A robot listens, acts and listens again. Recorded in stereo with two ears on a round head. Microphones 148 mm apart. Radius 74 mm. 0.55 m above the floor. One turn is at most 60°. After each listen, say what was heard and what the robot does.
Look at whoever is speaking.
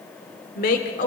The woman speaking: about 55° left or 125° left. Turn 55° left.
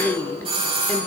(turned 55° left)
So it is at 10° left. Turn 10° left.
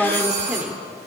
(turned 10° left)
Found it: a woman speaking, straight ahead, 1 to 2 m away.